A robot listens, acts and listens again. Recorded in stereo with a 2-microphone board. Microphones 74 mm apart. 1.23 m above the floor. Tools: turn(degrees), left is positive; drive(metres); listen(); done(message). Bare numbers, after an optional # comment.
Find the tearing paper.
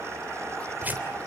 # The tearing paper: about 20° right or 160° right.
turn(-20)
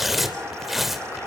done("Found it: tearing paper, straight ahead, 2 to 4 m away.")